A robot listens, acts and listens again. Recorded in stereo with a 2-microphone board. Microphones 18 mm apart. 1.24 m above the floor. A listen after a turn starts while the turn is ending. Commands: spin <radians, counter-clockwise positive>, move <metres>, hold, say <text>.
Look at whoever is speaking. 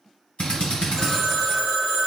hold
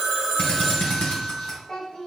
spin 0.52
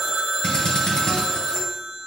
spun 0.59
hold
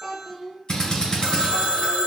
say Facing the child speaking.